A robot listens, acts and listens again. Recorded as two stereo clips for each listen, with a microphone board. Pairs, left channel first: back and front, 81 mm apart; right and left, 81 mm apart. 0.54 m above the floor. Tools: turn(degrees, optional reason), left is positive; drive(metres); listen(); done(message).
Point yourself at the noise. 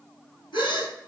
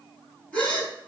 turn(degrees=-165, reason="The gasp: 165° right.")
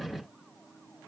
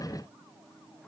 done("I heard a gasp from this way, but can't make it out now.")